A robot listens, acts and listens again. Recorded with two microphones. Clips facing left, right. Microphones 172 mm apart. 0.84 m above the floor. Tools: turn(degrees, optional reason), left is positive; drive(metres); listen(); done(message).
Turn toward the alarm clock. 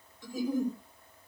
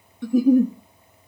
listen()
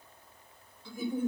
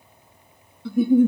listen()
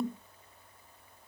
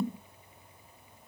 done("I can't make out an alarm clock, only a giggle.")